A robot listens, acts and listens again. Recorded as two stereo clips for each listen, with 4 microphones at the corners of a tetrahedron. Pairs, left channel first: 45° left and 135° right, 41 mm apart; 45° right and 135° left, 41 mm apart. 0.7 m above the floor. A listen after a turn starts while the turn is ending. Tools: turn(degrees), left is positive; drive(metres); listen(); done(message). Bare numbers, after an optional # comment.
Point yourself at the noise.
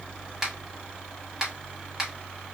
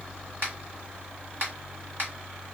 # The finger snap: 150° left.
turn(150)
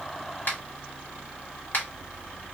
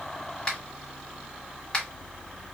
# The finger snap is now 15° left.
turn(15)
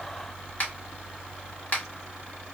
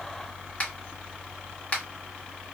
done("Facing the finger snap, 1 to 2 m away.")